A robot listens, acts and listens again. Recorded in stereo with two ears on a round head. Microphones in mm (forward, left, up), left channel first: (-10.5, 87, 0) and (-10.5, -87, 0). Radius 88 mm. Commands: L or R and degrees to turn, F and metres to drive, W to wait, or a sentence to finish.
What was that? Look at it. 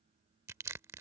R30
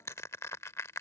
L15
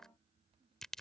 Found it: crushing, straight ahead.